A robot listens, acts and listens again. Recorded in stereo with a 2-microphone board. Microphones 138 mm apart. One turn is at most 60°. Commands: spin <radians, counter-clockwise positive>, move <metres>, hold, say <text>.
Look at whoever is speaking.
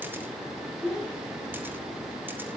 spin 0.52
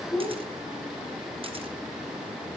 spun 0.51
spin 1.05
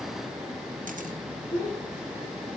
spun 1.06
spin 1.05
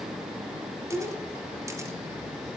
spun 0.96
spin 0.61
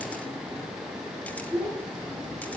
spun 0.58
say Found it: a child speaking, straight ahead.